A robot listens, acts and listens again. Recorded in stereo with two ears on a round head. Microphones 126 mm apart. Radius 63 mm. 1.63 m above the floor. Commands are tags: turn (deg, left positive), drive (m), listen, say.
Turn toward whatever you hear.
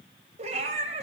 <turn deg="-50"/>
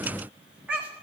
<turn deg="-10"/>
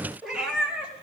<say>Found it: a cat meowing, straight ahead, over 4 m away.</say>